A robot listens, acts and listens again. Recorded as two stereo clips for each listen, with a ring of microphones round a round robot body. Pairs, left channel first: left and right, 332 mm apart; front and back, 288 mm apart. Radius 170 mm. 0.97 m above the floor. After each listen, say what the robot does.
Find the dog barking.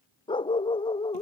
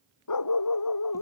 Turn 15° left.
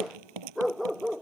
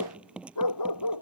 Found it: a dog barking, straight ahead.